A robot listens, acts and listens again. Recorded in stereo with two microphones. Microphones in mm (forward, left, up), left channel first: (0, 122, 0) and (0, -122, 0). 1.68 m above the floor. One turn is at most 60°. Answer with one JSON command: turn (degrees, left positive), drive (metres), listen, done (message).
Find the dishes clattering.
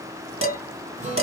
{"turn": -55}
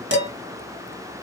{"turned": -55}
{"turn": -60}
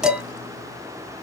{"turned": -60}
{"done": "Facing the dishes clattering."}